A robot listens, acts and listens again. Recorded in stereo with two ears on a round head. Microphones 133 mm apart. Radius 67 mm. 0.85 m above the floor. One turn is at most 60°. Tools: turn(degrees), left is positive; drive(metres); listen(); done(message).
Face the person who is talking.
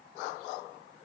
listen()
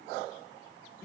listen()
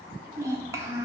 turn(degrees=-20)
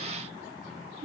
turn(degrees=-60)
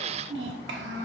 turn(degrees=-60)
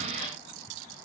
turn(degrees=-35)
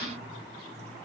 listen()
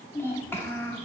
turn(degrees=15)
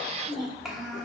done("Found it: a child speaking, straight ahead.")